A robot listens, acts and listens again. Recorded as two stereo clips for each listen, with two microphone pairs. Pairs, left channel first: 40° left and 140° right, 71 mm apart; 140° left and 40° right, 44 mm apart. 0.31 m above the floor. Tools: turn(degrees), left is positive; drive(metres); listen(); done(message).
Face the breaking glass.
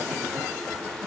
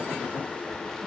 listen()
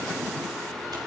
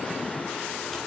listen()
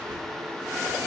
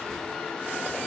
done("I can't make out breaking glass to turn to.")